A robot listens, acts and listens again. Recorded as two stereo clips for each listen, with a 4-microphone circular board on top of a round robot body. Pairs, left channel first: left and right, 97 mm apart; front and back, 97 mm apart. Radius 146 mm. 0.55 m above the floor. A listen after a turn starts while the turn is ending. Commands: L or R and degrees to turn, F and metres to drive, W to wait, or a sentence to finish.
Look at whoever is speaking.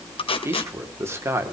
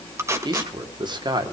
R150
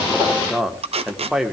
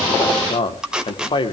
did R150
Found it: a man speaking, straight ahead, 2 to 4 m away.